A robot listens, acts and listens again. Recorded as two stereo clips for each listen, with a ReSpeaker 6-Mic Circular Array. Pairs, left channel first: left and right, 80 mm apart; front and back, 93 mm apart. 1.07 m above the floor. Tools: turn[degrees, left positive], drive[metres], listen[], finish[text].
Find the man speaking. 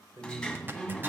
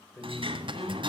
Thought: The man speaking: 50° right.
Action: turn[-50]
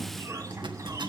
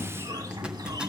Action: listen[]
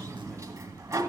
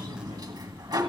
Action: listen[]
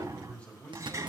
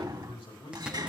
Thought: The man speaking is now 15° left.
Action: turn[15]
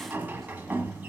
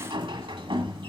Action: listen[]
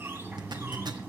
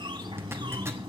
Action: listen[]
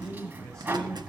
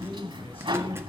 Thought: The man speaking is now 10° left.
Action: turn[10]
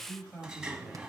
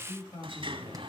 Action: finish[Found it: a man speaking, straight ahead.]